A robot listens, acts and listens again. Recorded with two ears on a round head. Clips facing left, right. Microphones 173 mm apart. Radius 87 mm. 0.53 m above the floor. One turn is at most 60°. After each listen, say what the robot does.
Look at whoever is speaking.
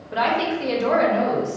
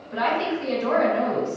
Turn 60° left.
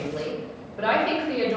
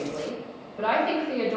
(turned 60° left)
Turn 15° left.
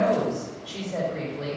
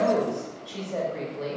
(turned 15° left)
Found it: a woman speaking, straight ahead, 1 to 2 m away.